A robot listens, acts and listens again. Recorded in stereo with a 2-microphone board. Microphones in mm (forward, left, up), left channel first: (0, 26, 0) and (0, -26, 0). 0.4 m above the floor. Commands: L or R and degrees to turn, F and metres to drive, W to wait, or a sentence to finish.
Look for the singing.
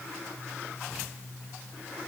W
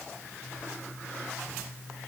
W
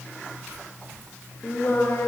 L65
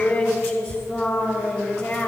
L40
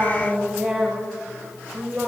Facing the singing.